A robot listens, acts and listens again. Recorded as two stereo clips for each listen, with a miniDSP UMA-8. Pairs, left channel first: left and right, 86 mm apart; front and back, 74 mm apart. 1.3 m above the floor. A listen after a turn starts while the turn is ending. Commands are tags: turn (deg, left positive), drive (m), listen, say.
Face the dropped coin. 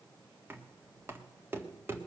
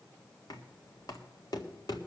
<listen/>
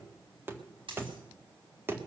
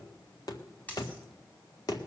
<turn deg="-70"/>
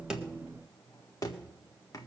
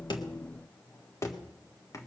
<say>Facing where the dropped coin came from. I can't hear it now.</say>